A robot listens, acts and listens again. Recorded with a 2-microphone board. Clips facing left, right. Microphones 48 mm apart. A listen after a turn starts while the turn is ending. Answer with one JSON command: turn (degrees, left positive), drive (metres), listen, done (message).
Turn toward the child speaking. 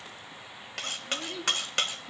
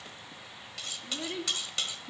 {"turn": -20}
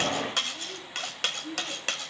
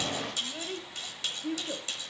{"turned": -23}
{"turn": -35}
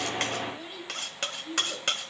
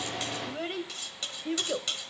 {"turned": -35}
{"turn": -130}
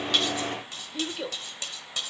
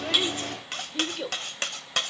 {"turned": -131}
{"done": "Found it: a child speaking, straight ahead."}